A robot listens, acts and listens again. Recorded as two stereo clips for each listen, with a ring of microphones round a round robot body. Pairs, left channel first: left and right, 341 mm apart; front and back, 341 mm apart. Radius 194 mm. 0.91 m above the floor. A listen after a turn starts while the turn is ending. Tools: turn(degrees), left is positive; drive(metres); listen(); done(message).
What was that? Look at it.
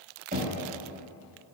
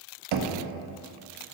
turn(degrees=-160)
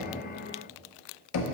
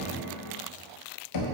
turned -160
turn(degrees=45)
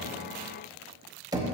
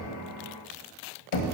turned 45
turn(degrees=-10)
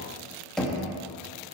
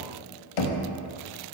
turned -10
done("Found it: knocking, straight ahead, under 1 m away.")